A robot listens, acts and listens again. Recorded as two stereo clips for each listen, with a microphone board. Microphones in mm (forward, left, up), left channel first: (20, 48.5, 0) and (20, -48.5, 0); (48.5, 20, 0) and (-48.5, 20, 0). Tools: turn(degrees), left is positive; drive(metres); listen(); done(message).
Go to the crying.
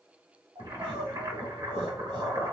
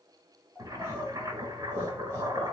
turn(degrees=-75)
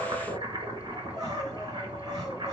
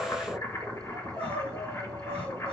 drive(metres=1.0)
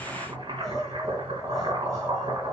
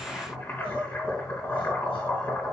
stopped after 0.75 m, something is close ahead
turn(degrees=10)
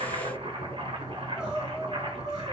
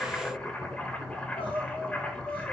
done("Blocked. The crying is further on, straight ahead.")